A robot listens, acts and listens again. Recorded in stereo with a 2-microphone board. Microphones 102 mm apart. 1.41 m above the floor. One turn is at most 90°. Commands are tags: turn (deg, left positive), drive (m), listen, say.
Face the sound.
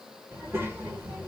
<turn deg="-25"/>
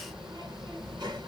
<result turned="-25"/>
<turn deg="-90"/>
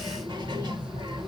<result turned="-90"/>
<turn deg="-50"/>
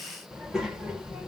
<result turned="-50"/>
<say>Facing the child speaking, 1 to 2 m away.</say>